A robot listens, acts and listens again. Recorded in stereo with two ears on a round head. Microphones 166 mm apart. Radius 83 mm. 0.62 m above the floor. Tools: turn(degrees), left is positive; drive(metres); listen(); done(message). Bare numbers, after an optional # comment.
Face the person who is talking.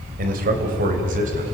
# The man speaking: about 45° right or 135° right.
turn(-45)
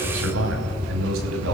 # So it is at 80° right.
turn(-80)
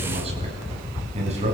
# The man speaking is now 35° right.
turn(-35)
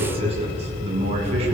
# The man speaking is now 35° right.
turn(-35)
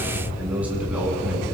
done("Found it: a man speaking, straight ahead, over 4 m away.")